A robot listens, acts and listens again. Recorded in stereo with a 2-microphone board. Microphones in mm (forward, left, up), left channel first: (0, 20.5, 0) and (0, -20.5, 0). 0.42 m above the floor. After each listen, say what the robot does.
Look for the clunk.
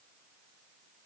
Keep listening.
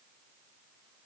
Keep listening.
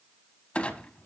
Turn 30° left.
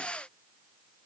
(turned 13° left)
Keep listening.
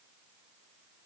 I heard a clunk, but can't make it out now. It was about 15° left or 135° left.